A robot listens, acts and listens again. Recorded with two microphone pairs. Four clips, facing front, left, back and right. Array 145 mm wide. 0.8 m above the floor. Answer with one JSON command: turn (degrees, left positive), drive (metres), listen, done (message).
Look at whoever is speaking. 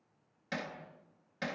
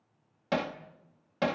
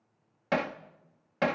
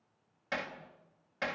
{"listen": true}
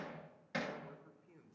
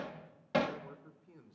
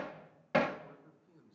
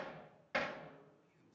{"turn": 80}
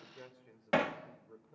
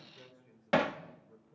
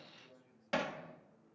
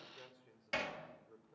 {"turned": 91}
{"turn": -10}
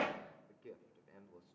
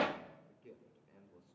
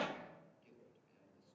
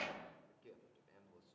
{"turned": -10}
{"done": "Found it: a man speaking, straight ahead, 2 to 4 m away."}